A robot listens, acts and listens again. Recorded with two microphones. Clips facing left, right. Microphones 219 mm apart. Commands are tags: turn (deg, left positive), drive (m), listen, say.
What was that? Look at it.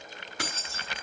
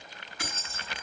<turn deg="90"/>
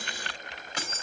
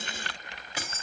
<say>Facing the keys jangling, 2 to 4 m away.</say>